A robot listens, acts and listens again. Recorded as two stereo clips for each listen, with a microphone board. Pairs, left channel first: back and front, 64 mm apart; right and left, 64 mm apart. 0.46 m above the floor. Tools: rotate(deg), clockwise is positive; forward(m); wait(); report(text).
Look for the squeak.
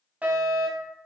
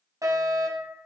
wait()
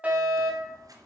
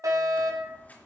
rotate(25)
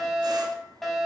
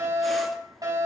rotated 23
wait()
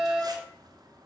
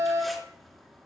report("Found it: a squeak, straight ahead, 2 to 4 m away.")